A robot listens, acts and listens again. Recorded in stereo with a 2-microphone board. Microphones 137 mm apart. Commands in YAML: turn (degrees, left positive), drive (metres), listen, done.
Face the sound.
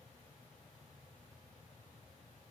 listen: true
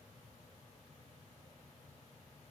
listen: true
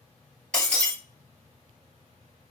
turn: 30
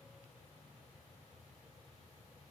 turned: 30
listen: true
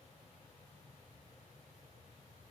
done: "I heard breaking glass, but can't make it out now. It was about 25° right or 145° left."